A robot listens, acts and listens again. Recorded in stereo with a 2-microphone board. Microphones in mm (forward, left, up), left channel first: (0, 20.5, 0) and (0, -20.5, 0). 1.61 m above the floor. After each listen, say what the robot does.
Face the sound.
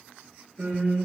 Turn 50° right.
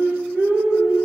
Turn 80° right.
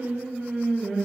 Turn 30° right.
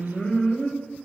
Turn 10° left.
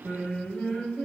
Facing the singing, 2 to 4 m away.